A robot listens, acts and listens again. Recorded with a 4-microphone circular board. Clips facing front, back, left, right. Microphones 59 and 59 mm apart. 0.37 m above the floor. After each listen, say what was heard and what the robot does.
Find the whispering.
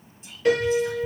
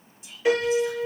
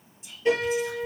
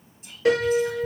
The whispering: 50° right. Turn 50° right.
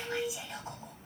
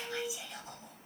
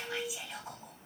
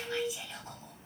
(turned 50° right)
The whispering is now 10° left. Turn 10° left.
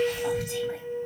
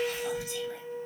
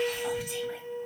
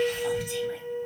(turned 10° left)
Keep listening.
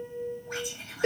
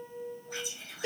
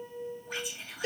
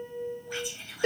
Facing the whispering.